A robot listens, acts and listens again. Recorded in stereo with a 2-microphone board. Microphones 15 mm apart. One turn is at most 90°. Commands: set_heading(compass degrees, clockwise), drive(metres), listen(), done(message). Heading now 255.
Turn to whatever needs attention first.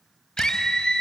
set_heading(195)
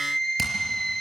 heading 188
set_heading(158)
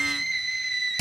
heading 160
done("Found it: a scream, straight ahead, 2 to 4 m away.")